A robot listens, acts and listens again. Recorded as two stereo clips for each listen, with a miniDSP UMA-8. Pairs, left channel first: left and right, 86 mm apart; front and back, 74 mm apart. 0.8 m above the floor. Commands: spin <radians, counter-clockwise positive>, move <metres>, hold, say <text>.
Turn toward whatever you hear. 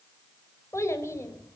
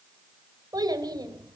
spin 2.62
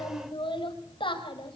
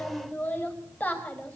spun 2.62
spin 1.22
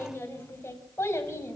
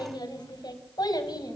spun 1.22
spin 0.52
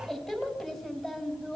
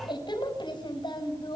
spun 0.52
say Found it: a child speaking, straight ahead.